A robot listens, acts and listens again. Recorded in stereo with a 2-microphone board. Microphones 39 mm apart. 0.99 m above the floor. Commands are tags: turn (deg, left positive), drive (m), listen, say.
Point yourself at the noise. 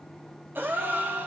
<turn deg="-65"/>
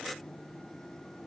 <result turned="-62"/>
<listen/>
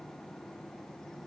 <say>I heard a gasp, but can't make it out now. It was about 5° right or 50° right.</say>